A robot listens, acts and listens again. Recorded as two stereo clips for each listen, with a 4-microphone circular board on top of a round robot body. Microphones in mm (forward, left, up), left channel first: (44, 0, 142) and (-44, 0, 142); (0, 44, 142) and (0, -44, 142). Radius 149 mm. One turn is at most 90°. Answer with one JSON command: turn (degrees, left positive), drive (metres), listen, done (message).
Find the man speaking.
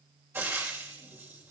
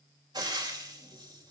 {"listen": true}
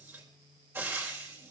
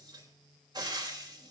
{"listen": true}
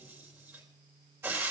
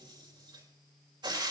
{"done": "I can't make out a man speaking to turn to."}